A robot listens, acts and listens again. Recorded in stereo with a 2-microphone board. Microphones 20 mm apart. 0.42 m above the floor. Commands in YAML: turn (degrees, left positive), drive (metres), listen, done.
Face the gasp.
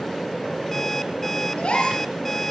turn: 60
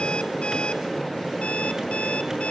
listen: true
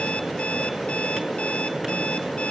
done: "I heard a gasp, but can't make it out now. It was about straight ahead or 60° left."